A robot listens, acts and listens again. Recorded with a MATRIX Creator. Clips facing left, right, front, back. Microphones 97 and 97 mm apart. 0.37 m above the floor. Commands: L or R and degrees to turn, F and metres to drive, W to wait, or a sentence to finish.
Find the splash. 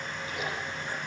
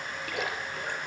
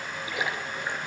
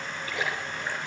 R70
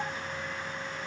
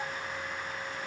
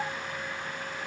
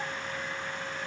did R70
Facing where the splash came from. I can't hear it now.